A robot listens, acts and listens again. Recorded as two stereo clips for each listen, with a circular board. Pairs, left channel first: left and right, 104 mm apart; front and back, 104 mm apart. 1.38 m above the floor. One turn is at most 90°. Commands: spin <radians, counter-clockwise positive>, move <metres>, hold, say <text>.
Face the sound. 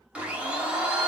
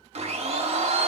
spin -1.57
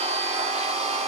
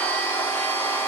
spin -1.31
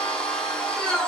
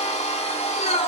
spin 0.17
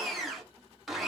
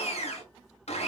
say Found it: a blender, straight ahead.